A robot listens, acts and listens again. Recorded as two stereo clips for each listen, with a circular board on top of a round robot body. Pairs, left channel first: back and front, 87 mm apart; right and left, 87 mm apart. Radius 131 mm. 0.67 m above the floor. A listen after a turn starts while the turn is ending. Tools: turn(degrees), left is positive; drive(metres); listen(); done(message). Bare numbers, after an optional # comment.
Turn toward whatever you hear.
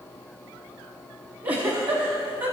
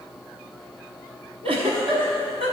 # The giggle: 75° left.
turn(75)
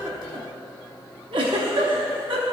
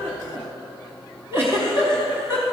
# The giggle is now 25° left.
turn(25)
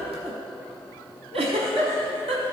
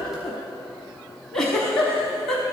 done("Found it: a giggle, straight ahead, under 1 m away.")